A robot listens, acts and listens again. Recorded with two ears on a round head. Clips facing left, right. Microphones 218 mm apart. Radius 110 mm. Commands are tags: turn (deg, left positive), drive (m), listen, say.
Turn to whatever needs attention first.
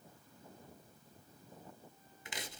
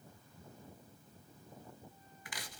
<listen/>
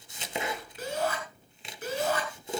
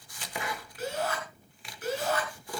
<turn deg="90"/>
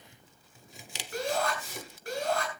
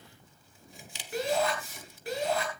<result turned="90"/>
<say>Facing the shout.</say>